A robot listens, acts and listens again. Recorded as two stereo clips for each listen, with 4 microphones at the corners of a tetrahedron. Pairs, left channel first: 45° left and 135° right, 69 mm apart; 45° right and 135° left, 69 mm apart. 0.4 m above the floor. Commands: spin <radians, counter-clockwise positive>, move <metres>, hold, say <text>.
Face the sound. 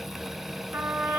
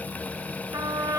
spin 2.97
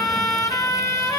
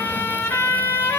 spin 0.26
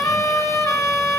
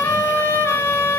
say Found it: a trumpet, straight ahead, 2 to 4 m away.